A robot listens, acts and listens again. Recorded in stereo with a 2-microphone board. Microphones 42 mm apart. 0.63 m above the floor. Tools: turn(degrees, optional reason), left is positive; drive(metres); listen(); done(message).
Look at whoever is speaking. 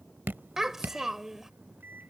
turn(degrees=-30)
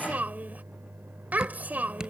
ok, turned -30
turn(degrees=-135, reason="So it is at 135° right.")
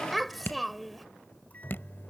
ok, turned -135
done("Found it: a child speaking, straight ahead.")